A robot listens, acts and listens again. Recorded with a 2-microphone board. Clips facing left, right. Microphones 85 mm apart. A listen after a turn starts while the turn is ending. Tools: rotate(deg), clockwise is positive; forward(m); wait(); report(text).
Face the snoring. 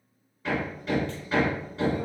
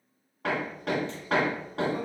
wait()
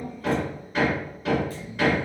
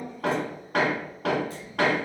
rotate(-90)
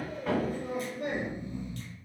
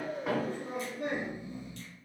rotate(10)
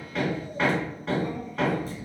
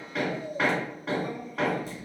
report("Found it: snoring, straight ahead, 2 to 4 m away.")